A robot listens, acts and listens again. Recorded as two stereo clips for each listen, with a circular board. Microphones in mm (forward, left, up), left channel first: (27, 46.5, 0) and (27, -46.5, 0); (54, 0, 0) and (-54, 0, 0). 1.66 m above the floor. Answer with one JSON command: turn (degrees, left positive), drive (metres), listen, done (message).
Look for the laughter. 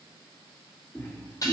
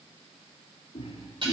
{"turn": 35}
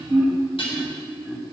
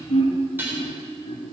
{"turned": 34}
{"turn": 15}
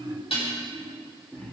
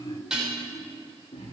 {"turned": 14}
{"turn": 15}
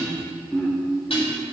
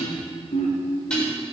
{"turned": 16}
{"turn": 15}
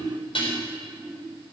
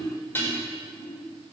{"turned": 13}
{"turn": 10}
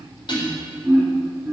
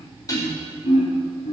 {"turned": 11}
{"done": "Found it: laughter, straight ahead, 2 to 4 m away."}